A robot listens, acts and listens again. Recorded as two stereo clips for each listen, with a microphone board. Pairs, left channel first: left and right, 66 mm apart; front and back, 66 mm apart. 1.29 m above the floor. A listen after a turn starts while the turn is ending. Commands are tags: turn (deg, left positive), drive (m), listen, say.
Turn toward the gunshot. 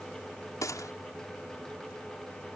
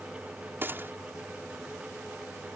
<turn deg="125"/>
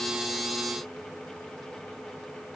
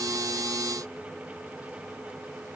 <say>Facing where the gunshot came from. I can't hear it now.</say>